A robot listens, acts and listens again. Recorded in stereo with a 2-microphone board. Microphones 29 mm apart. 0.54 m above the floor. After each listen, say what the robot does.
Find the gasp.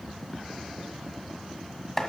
Keep listening.
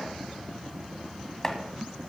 Keep listening.
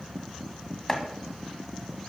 I can't make out a gasp to turn to.